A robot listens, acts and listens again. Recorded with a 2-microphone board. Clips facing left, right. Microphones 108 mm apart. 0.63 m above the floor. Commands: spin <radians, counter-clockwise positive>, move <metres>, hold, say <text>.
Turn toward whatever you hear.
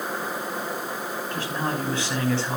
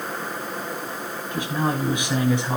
spin -0.35
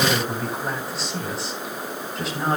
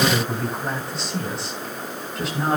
spin 0.52
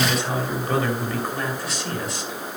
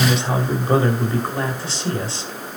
spin -0.61
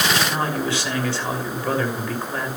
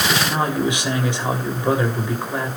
spin -0.35
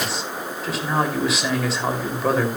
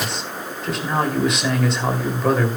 say Facing the man speaking.